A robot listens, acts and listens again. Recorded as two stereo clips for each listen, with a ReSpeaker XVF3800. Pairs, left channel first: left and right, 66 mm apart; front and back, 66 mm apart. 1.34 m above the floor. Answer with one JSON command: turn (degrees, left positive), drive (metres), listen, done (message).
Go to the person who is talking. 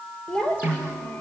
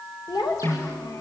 {"turn": 15}
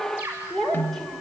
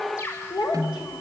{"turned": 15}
{"drive": 1.0}
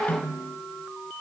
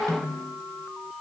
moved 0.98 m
{"listen": true}
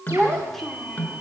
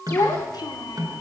{"drive": 1.0}
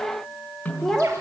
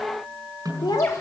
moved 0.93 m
{"drive": 1.0}
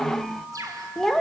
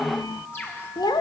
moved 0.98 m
{"drive": 1.0}
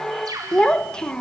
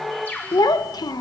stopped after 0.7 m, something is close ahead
{"turn": 10}
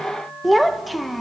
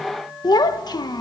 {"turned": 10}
{"done": "Arrived at the child speaking, straight ahead."}